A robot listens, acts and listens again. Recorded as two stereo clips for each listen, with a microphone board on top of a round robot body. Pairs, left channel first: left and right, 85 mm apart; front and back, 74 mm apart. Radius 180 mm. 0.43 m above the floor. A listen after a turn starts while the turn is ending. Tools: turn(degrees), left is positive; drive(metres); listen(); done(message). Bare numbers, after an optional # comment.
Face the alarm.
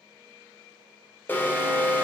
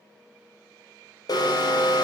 # The alarm: 25° left.
turn(25)
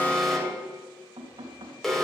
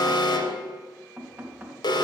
done("Facing the alarm, 2 to 4 m away.")